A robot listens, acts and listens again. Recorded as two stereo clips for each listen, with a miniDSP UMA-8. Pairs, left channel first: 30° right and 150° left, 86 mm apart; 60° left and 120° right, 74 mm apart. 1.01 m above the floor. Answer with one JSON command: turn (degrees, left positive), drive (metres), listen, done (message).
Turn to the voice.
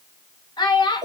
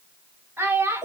{"turn": -65}
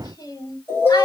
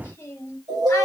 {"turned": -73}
{"turn": 10}
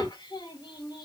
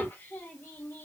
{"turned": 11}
{"listen": true}
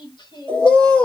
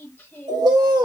{"done": "I heard a child speaking from this way, but can't make it out now."}